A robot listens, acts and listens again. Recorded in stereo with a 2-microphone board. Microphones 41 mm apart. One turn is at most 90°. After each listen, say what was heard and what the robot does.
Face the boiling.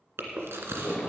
The boiling: about 60° left or 120° left. Turn 60° left.
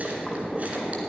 So it is at 10° left. Turn 10° left.
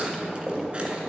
Found it: boiling, straight ahead, 2 to 4 m away.